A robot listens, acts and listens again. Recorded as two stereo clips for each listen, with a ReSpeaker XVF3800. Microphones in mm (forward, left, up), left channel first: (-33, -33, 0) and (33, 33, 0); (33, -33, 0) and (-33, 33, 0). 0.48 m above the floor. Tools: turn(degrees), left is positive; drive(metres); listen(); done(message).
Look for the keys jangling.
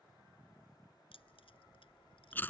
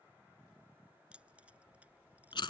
turn(degrees=-150)
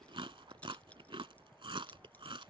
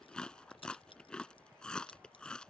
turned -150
listen()
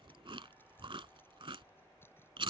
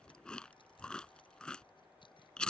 listen()
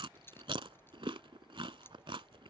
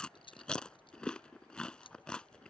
turn(degrees=-70)
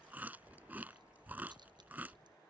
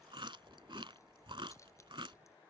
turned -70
listen()
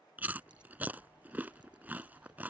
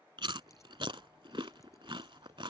listen()
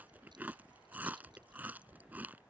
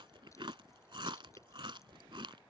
done("I heard keys jangling from this way, but can't make it out now.")